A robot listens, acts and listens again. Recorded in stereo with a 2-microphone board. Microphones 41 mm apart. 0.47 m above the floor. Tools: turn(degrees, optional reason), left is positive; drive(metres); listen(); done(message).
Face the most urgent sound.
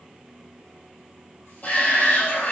turn(degrees=40, reason="The shout: about 40° left or 140° left.")
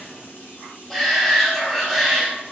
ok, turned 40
done("Found it: a shout, straight ahead.")